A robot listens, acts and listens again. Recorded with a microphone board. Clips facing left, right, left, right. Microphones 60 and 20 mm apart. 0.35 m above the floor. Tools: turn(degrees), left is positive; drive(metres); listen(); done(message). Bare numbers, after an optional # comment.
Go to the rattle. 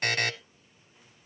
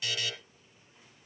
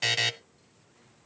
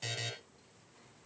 listen()
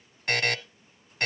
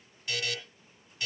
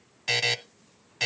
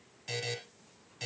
listen()
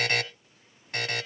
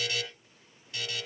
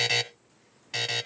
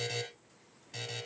done("I can't make out a rattle, only a buzzer.")